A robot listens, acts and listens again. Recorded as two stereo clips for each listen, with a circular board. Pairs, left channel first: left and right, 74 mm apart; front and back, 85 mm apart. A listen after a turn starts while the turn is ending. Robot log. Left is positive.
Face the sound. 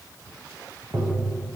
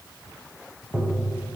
note: The tapping: 110° right.
cmd yaw -110
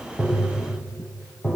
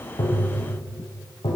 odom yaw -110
note: The tapping is now 10° left.
cmd yaw +10
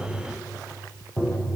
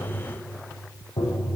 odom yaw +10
end: Facing the tapping.